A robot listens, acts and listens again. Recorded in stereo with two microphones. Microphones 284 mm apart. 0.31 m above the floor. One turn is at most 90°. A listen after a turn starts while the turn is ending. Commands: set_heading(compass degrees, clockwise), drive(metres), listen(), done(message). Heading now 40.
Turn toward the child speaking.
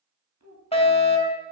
set_heading(130)
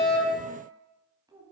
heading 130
set_heading(145)
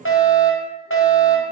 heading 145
listen()
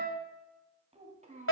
set_heading(170)
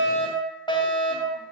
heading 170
listen()
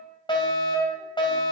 listen()
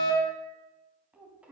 done("Found it: a child speaking, straight ahead, 1 to 2 m away.")